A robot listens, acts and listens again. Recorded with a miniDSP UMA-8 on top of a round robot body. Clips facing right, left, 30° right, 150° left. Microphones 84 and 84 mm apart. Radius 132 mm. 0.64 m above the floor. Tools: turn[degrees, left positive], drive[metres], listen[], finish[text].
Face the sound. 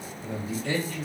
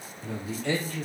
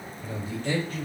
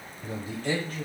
Thought: The man speaking: 100° left.
Action: turn[100]
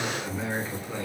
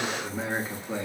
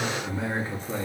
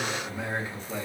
Thought: The man speaking is now 20° left.
Action: turn[20]
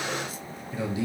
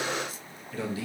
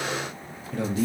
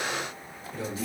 Thought: The man speaking is now 20° right.
Action: turn[-20]
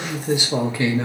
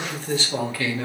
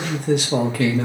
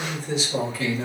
Thought: The man speaking is now 30° right.
Action: turn[-30]
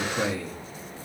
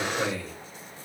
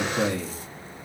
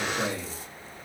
Thought: The man speaking is now 15° right.
Action: turn[-15]
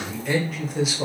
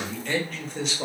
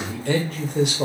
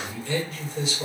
Action: finish[Facing the man speaking.]